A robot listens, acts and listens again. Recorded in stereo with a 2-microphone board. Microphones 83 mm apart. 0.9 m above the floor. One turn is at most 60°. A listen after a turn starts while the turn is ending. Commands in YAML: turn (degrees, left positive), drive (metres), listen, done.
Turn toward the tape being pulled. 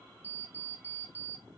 listen: true
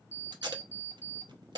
turn: -60
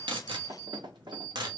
turn: -60
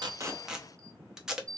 turn: -10
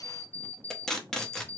done: "Facing the tape being pulled."